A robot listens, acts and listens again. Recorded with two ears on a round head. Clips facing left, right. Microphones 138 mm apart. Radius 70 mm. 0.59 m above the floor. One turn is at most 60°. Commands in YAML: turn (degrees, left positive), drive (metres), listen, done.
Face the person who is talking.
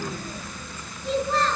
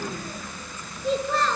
turn: -60
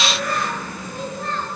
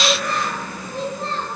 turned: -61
turn: -25
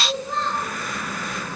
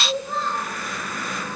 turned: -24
done: "Found it: a child speaking, straight ahead, over 4 m away."